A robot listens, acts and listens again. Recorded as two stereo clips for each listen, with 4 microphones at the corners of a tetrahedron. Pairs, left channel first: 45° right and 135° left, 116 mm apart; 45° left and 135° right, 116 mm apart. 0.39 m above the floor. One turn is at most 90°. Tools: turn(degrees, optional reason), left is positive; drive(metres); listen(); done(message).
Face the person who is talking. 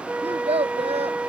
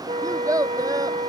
turn(degrees=90, reason="The child speaking: 165° left.")
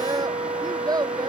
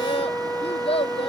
turn(degrees=80, reason="The child speaking is now 80° left.")
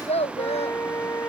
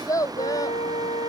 turn(degrees=-15, reason="The child speaking is now 15° right.")
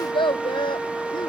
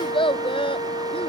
done("Found it: a child speaking, straight ahead.")